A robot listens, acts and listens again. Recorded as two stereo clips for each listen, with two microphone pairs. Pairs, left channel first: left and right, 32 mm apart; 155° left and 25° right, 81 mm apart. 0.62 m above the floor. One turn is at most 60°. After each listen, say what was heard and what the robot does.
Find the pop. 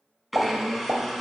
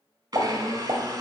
The pop: 60° right. Turn 60° right.
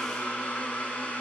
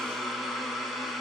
Facing where the pop came from. I can't hear it now.